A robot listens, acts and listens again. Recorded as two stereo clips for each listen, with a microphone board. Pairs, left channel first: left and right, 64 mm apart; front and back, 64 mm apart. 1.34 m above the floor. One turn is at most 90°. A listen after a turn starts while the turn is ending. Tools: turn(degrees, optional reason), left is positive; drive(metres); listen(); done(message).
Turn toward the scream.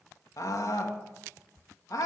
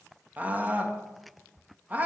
turn(degrees=90, reason="The scream: 120° left.")
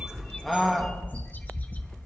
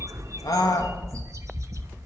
done("Found it: a scream, straight ahead.")